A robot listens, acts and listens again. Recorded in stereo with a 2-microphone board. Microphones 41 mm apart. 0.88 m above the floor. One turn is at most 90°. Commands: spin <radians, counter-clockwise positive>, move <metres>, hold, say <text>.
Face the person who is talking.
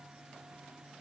hold
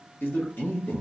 spin 0.96
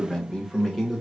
say Found it: a man speaking, straight ahead.